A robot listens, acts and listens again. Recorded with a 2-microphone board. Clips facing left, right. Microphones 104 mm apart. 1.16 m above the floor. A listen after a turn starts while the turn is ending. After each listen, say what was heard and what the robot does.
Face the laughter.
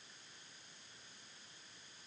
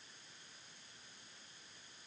Keep listening.
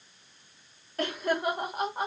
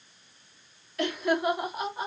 The laughter: about 50° left or 130° left. Turn 50° left.
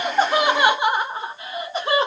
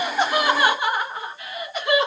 So it is at 30° left. Turn 30° left.
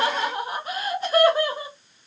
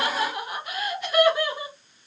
The laughter is now 35° left. Turn 35° left.
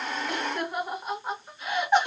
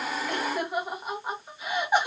The laughter is now 10° right. Turn 10° right.
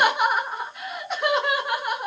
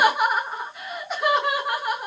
Found it: laughter, straight ahead.